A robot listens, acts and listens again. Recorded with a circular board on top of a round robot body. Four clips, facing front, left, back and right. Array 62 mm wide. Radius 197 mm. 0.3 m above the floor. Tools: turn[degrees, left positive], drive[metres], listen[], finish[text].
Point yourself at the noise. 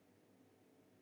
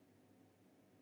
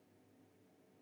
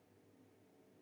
Action: listen[]
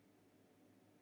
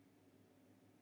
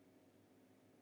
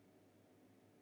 Action: listen[]
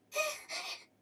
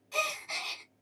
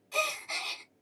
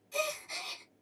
Thought: The gasp: 140° left.
Action: turn[140]
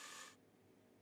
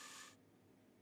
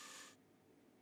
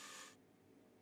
Action: finish[Facing where the gasp came from. I can't hear it now.]